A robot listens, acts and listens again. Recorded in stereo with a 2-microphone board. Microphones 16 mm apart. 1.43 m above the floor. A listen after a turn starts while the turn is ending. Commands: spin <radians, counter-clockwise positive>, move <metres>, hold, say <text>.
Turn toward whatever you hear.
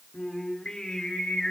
spin 1.57
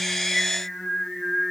say Found it: singing, straight ahead, over 4 m away.